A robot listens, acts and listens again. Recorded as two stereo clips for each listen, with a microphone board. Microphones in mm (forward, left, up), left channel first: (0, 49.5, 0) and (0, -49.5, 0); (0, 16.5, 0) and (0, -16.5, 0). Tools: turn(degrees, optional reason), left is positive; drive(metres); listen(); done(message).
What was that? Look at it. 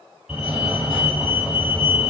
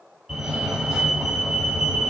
turn(degrees=-30)
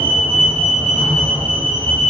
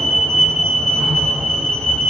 turn(degrees=20, reason="So it is at 20° left.")
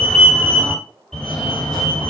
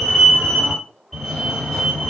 turn(degrees=10, reason="The fire alarm is now 10° left.")
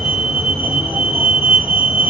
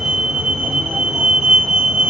done("Facing the fire alarm.")